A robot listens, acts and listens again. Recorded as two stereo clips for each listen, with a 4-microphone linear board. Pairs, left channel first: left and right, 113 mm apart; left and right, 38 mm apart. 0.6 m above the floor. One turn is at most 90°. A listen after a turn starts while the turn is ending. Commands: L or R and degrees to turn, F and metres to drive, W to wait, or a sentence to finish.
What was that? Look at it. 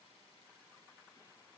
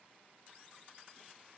W
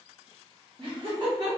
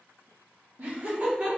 R40
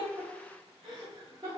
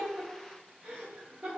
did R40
R45
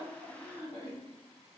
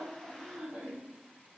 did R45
R65
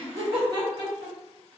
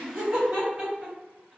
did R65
R45
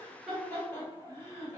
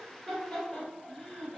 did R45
L20
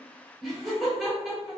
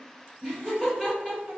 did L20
Facing the laughter.